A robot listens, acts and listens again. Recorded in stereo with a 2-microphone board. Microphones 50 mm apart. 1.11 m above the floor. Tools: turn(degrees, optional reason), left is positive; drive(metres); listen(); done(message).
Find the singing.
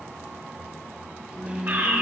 turn(degrees=90)
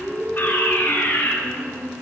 turn(degrees=-15, reason="So it is at 15° right.")
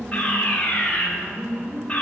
done("Facing the singing, 2 to 4 m away.")